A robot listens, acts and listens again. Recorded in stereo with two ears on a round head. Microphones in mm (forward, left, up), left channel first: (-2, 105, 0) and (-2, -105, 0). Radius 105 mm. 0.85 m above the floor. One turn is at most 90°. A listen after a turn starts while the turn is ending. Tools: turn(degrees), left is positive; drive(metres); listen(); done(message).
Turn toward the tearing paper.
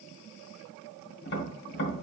listen()
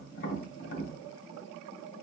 listen()
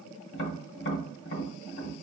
done("I can't make out tearing paper, only tapping.")